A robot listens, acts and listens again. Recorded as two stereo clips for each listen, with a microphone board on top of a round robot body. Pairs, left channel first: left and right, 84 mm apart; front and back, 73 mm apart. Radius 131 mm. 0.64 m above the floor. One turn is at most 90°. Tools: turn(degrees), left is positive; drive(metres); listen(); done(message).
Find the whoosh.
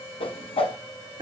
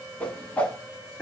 turn(degrees=75)
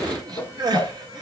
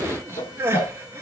turn(degrees=25)
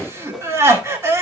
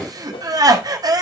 done("Found it: a whoosh, straight ahead, 1 to 2 m away.")